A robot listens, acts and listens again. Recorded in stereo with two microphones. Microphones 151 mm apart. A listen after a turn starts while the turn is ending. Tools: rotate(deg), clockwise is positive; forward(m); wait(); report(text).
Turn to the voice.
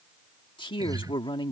rotate(-35)
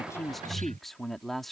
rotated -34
report("Facing the man speaking.")